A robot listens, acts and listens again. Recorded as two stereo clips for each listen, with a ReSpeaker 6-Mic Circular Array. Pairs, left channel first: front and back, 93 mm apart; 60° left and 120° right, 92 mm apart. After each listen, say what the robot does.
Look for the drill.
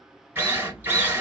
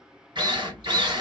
Turn 115° right.
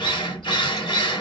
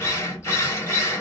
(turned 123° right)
Found it: a drill, straight ahead, 1 to 2 m away.